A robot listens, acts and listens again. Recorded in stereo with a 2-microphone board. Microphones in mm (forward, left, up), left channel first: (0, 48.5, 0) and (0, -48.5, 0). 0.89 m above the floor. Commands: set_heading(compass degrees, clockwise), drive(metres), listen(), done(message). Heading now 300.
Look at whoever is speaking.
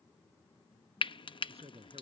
set_heading(30)
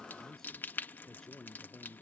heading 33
done("Found it: a man speaking, straight ahead.")